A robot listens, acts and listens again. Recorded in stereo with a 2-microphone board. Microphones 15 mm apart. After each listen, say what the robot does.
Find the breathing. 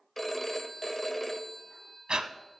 Turn 90° right.
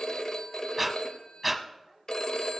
Facing the breathing, under 1 m away.